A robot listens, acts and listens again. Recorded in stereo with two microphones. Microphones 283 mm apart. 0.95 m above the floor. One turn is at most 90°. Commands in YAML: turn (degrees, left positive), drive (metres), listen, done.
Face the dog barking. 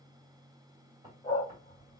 turn: 15
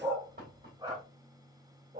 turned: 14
turn: -30
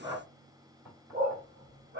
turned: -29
turn: -40
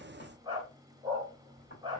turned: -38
turn: -15
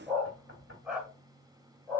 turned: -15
done: "Facing the dog barking, 1 to 2 m away."